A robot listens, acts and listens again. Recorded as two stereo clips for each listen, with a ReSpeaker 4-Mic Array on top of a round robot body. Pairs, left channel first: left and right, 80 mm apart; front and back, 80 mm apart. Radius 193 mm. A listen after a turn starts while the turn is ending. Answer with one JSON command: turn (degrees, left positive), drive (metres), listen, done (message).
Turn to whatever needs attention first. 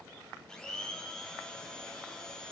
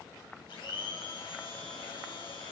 {"listen": true}
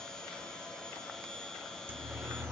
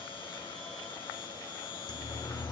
{"turn": -25}
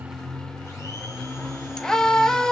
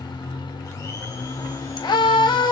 {"turn": 10}
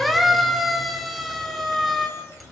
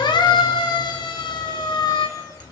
{"done": "Facing the siren."}